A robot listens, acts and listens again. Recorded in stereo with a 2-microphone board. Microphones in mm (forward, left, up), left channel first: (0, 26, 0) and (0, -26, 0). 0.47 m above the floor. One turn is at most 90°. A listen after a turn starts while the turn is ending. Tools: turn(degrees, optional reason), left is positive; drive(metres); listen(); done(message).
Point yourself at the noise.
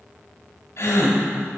turn(degrees=60, reason="The gasp: about 60° left or 120° left.")
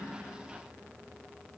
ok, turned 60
listen()
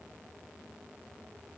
done("I heard a gasp, but can't make it out now. It was about straight ahead or 60° left.")